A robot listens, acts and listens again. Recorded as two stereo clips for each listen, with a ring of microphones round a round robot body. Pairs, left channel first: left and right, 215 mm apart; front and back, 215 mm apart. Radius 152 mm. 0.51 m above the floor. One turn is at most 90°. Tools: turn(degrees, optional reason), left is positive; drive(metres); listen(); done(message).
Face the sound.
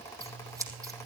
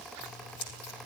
turn(degrees=-15, reason="The scissors: 15° right.")
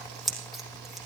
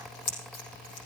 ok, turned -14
done("Facing the scissors.")